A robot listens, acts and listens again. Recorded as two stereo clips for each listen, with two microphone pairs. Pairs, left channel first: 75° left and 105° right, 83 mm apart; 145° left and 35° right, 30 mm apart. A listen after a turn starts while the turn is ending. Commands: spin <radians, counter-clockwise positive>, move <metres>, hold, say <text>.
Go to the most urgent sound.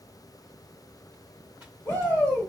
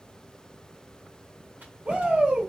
spin 0.26
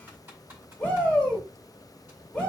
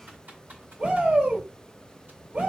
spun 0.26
move 1.0
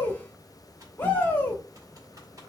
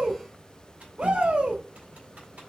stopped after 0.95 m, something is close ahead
spin 0.26
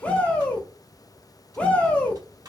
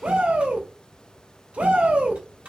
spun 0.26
say Arrived at the shout, straight ahead.